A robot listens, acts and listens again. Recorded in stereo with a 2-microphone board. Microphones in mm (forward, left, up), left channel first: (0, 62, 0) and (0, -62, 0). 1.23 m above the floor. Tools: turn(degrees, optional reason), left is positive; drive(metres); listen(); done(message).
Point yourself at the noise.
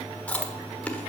turn(degrees=30)
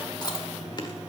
turn(degrees=135, reason="So it is at 135° left.")
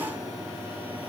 listen()
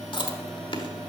turn(degrees=45, reason="The chewing is now 45° left.")
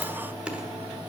turn(degrees=-10, reason="The chewing is now 10° right.")
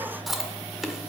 done("Found it: chewing, straight ahead, 1 to 2 m away.")